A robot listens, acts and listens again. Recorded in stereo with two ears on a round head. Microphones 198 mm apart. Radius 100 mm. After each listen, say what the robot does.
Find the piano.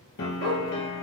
Turn 60° left.
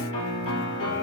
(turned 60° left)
Turn 60° left.
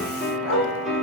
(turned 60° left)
Found it: a piano, straight ahead, 1 to 2 m away.